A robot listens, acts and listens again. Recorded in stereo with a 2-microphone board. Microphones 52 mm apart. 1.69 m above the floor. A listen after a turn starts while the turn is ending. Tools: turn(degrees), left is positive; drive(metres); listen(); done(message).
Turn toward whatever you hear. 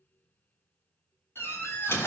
turn(degrees=55)
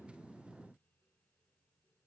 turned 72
listen()
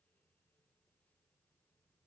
done("I heard a door slam, but can't make it out now. It was about 20° right or 55° left.")